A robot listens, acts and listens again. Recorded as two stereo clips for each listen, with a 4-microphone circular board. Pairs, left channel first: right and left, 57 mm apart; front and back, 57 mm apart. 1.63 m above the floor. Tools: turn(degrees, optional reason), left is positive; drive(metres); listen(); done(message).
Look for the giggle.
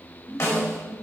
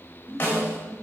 turn(degrees=160, reason="The giggle: 160° left.")
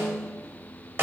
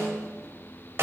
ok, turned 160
listen()
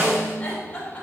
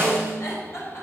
turn(degrees=-15, reason="The giggle is now 15° right.")
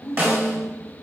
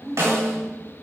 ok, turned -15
done("Facing the giggle, 2 to 4 m away.")